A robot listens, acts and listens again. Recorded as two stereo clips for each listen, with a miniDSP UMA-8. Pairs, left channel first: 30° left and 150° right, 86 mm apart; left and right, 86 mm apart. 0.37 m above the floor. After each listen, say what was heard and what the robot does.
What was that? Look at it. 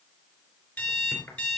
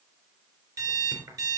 The alarm clock: 40° right. Turn 40° right.
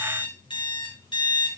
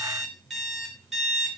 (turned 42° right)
Found it: an alarm clock, straight ahead.